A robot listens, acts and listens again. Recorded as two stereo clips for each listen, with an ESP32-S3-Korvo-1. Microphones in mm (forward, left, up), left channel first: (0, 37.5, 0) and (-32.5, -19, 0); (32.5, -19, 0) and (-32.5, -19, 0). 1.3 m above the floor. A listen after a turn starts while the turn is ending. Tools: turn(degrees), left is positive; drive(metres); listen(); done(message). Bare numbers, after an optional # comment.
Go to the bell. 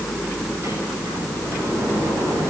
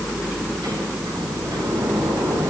listen()
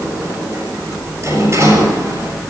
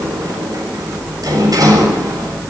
listen()
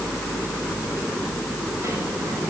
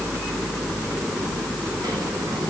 done("I can't make out a bell, only a sliding door.")